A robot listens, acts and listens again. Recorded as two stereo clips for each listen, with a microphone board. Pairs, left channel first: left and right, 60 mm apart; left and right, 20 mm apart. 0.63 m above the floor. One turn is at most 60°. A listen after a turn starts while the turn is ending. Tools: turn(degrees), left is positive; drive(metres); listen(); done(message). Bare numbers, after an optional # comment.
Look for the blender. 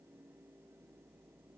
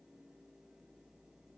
listen()
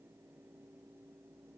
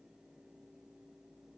listen()
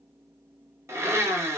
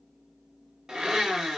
# The blender: about 50° right or 130° right.
turn(-50)
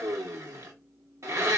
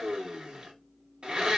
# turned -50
# So it is at 70° right.
turn(-60)
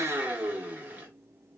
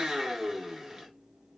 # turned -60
# The blender is now 30° right.
turn(-30)
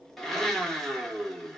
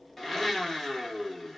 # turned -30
# The blender is now 10° left.
turn(10)
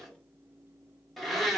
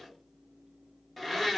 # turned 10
done("Facing the blender.")